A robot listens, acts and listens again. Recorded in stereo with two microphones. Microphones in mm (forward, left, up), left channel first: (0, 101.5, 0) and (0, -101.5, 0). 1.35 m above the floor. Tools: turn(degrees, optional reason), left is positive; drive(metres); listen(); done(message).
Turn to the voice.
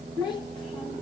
turn(degrees=20, reason="The child speaking: about 20° left or 160° left.")
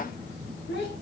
turn(degrees=120, reason="So it is at 120° left.")
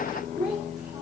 done("Found it: a child speaking, straight ahead, 2 to 4 m away.")